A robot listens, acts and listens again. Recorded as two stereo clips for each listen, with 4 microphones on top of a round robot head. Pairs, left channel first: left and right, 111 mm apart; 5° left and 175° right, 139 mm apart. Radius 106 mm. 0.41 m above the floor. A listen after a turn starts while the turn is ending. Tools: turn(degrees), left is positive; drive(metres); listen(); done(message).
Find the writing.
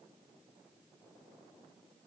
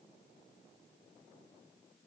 listen()
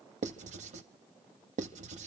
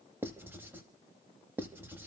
turn(degrees=-100)
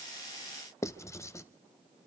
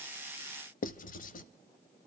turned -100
turn(degrees=25)
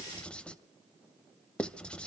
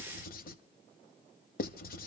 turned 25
turn(degrees=10)
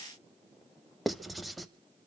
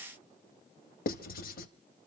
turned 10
done("Facing the writing.")